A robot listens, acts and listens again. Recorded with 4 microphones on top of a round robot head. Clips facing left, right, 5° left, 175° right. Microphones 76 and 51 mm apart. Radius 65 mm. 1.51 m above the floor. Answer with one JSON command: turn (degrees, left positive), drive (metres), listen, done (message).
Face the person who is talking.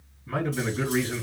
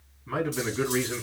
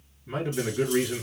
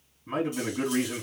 {"turn": -155}
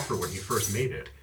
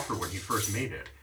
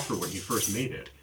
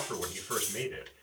{"turn": -30}
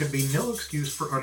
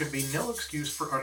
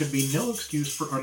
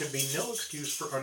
{"done": "Found it: a man speaking, straight ahead."}